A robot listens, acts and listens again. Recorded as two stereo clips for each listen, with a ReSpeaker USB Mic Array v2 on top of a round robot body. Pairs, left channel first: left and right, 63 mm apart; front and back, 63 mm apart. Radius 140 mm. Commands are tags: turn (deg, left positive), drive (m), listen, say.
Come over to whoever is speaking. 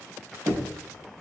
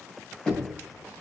<listen/>
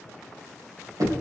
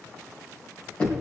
<listen/>
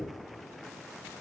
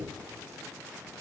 <say>I can't make out anyone speaking to turn to.</say>